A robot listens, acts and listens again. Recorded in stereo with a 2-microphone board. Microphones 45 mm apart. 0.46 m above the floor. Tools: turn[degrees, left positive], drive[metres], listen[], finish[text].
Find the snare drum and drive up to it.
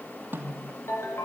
Thought: The snare drum: about 50° right or 130° right.
Action: turn[-50]
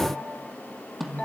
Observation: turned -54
Action: drive[1.0]
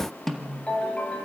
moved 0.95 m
Action: drive[1.0]
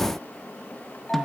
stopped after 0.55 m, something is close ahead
Action: listen[]
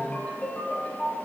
Action: listen[]
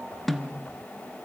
Action: finish[I am next to the snare drum.]